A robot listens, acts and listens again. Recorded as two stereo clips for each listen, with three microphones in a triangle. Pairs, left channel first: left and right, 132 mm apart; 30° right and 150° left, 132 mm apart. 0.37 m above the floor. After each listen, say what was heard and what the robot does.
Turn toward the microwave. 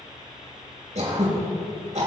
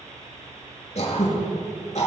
Keep listening.
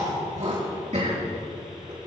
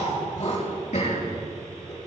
Keep listening.
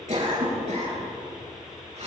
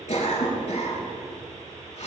I can't make out a microwave, only throat clearing.